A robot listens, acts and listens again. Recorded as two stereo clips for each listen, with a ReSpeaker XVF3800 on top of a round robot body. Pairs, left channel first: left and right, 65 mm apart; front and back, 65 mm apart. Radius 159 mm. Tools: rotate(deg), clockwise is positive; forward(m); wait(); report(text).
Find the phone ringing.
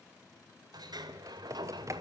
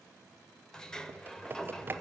wait()
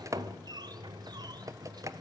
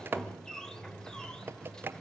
wait()
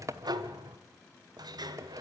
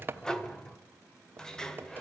report("I can't make out a phone ringing to turn to.")